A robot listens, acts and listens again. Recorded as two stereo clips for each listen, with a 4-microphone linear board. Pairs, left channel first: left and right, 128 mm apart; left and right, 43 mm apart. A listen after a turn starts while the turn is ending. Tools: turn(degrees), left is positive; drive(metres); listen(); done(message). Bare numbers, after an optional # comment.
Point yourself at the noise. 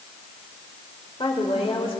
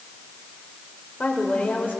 # The woman speaking: about 45° left or 135° left.
turn(45)
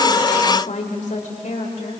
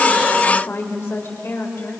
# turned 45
# So it is at 75° left.
turn(75)
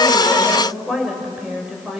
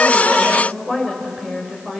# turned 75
done("Facing the woman speaking.")